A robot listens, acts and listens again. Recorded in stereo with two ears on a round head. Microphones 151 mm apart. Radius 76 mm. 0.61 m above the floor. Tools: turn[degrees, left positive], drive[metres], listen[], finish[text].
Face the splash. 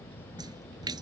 Thought: The splash: about 25° right or 155° right.
Action: turn[-25]
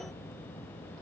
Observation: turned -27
Action: listen[]
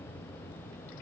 Action: finish[I heard a splash, but can't make it out now. It was about straight ahead or 125° right.]